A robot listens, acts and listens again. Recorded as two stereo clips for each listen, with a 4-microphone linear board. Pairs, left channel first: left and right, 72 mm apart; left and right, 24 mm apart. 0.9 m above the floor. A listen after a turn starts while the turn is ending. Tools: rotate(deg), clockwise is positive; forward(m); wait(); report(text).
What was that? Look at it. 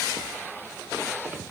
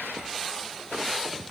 wait()
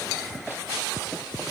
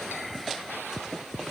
wait()
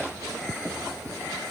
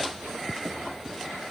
report("I can't make out anything to turn to.")